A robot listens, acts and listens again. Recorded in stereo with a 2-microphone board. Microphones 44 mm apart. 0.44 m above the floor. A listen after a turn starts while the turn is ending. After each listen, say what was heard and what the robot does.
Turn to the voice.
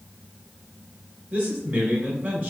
The man speaking: about 45° right or 135° right. Turn 45° right.
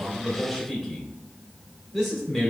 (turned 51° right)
Facing the man speaking.